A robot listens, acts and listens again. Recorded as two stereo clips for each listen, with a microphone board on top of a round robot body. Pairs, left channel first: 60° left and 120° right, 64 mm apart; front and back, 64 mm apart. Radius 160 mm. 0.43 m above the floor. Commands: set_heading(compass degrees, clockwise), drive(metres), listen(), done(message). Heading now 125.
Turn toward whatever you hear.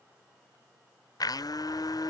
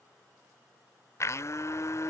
set_heading(80)
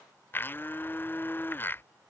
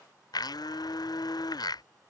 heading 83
done("Found it: a blender, straight ahead.")